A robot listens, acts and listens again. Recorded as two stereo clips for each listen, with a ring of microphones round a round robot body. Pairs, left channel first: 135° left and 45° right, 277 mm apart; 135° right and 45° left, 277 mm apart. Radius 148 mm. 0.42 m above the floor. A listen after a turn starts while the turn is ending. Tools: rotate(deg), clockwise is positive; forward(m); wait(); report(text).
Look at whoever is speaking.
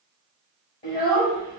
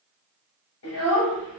rotate(175)
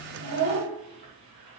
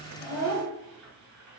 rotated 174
report("Found it: a child speaking, straight ahead, 1 to 2 m away.")